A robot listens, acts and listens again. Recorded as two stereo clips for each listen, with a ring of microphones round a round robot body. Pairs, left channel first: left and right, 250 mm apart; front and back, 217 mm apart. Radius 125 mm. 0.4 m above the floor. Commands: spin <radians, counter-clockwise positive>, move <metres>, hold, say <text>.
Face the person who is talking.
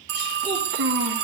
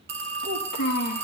spin -0.79
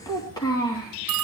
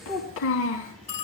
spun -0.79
spin 0.26
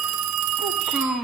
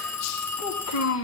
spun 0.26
say Found it: a child speaking, straight ahead, 2 to 4 m away.